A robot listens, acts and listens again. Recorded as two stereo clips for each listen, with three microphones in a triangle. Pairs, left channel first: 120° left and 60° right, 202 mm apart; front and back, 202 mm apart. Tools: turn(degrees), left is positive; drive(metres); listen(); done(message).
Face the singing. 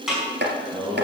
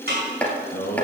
turn(degrees=35)
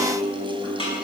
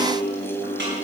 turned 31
done("Facing the singing.")